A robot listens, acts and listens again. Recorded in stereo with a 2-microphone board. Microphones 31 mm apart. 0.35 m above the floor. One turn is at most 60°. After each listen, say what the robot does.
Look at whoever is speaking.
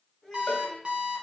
Turn 30° left.
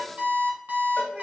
Keep listening.
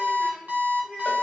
Turn 45° right.
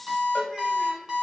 Keep listening.
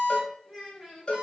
Turn 15° right.
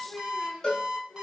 Found it: a child speaking, straight ahead.